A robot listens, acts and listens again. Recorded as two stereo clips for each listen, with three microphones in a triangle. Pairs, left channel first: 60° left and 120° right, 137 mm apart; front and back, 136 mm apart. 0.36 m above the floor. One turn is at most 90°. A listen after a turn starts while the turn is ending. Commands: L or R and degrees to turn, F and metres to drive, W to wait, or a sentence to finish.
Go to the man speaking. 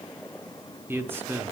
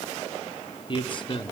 R45
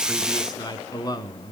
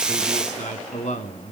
F1.0
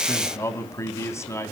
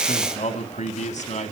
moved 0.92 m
F1.0
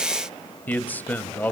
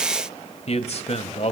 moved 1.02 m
R15
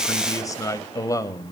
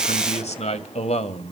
F1.0
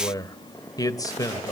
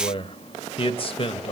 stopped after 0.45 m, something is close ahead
L10
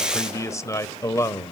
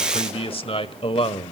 I am next to the man speaking.